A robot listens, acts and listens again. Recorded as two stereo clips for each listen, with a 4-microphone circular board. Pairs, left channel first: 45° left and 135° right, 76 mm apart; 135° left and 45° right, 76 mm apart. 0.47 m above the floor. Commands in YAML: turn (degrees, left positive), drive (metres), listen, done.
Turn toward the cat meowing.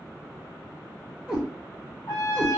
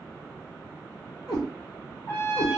turn: 145
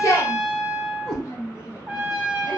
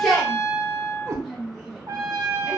done: "Facing the cat meowing."